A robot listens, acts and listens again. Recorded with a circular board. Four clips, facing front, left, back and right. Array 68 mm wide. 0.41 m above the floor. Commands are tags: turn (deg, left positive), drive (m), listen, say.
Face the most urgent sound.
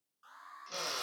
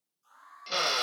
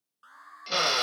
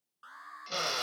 <turn deg="-115"/>
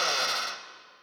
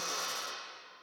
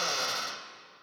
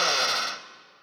<listen/>
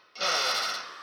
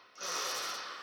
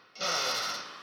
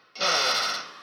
<listen/>
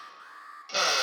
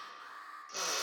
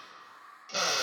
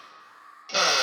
<turn deg="20"/>
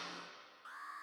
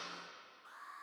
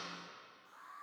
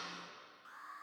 <say>Facing the alarm, over 4 m away.</say>